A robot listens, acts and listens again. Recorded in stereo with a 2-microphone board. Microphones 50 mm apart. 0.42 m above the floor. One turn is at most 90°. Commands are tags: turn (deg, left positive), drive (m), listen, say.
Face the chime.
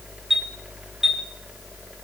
<turn deg="-30"/>
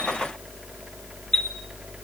<turn deg="15"/>
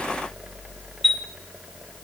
<say>Facing the chime, 1 to 2 m away.</say>